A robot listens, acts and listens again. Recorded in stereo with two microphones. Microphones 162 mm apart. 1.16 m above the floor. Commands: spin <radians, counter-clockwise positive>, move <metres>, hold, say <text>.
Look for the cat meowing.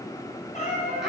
spin 0.87
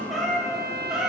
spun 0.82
say Found it: a cat meowing, straight ahead.